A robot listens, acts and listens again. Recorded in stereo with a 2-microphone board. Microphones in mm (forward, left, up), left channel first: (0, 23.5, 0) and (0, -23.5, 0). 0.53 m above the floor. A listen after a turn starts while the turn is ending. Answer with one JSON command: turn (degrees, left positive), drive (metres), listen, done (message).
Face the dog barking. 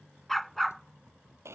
{"turn": 30}
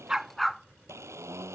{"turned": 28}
{"turn": 30}
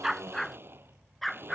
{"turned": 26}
{"turn": 30}
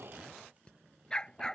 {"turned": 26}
{"turn": 15}
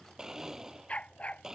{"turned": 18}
{"turn": 155}
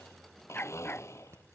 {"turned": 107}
{"turn": 45}
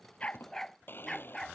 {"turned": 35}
{"turn": 10}
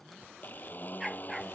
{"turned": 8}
{"done": "Found it: a dog barking, straight ahead."}